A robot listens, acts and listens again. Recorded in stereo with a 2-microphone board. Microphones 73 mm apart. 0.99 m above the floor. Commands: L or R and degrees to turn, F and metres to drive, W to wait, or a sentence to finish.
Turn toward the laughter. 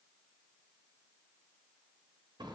W
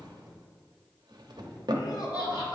L90
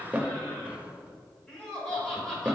L10
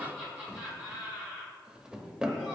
Found it: laughter, straight ahead, over 4 m away.